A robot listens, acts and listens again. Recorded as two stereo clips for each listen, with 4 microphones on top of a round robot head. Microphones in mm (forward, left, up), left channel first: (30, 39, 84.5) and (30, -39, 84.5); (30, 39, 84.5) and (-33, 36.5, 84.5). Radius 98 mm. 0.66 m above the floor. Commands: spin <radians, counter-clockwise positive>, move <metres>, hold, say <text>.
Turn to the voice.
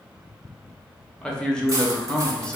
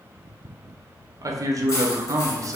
spin 2.97
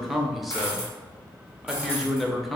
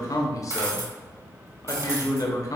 say Facing the man speaking.